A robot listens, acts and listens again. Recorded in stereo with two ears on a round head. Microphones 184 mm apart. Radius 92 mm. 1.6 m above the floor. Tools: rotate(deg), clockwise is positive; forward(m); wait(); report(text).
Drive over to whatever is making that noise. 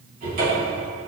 rotate(40)
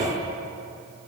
rotate(100)
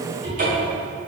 rotate(40)
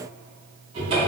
rotate(25)
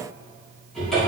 forward(1.0)
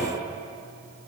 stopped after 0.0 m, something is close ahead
wait()
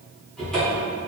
report("Something is in my way. I am facing the cupboard door but have not reached it.")